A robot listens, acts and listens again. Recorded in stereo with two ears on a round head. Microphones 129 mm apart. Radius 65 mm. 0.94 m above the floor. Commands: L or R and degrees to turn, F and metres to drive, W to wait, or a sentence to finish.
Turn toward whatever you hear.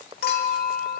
L75
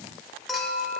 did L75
Facing the clink.